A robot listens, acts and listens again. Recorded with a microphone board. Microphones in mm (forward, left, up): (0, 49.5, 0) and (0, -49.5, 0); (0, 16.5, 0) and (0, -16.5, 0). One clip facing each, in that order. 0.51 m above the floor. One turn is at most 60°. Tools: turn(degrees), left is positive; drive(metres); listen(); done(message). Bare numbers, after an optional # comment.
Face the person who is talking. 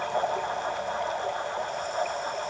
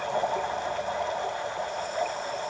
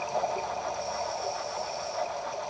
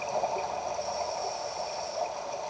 listen()
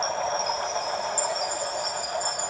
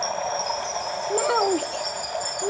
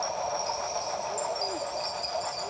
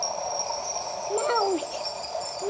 # The child speaking: about 70° right or 110° right.
turn(-60)
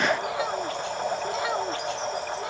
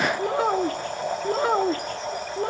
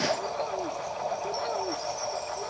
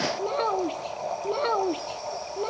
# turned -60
# So it is at 40° right.
turn(-40)
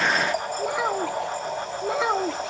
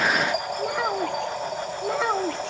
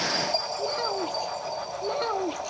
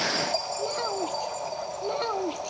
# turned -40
done("Found it: a child speaking, straight ahead.")